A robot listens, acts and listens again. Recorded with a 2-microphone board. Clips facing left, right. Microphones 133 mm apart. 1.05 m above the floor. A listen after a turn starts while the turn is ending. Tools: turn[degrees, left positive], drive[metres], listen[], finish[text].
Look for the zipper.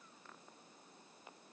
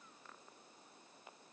Action: listen[]
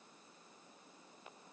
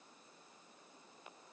Action: listen[]
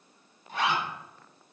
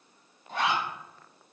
Thought: The zipper: about 65° right or 115° right.
Action: turn[-65]
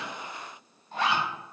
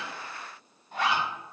Thought: So it is at 10° right.
Action: turn[-10]
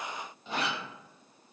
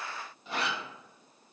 Action: finish[Facing the zipper, 1 to 2 m away.]